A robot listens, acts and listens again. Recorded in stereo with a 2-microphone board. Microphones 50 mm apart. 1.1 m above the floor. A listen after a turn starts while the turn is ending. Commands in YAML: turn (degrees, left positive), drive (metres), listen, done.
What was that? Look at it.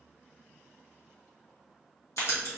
turn: 70
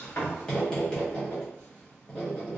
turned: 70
turn: 20
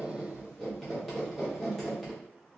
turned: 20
done: "Facing the writing."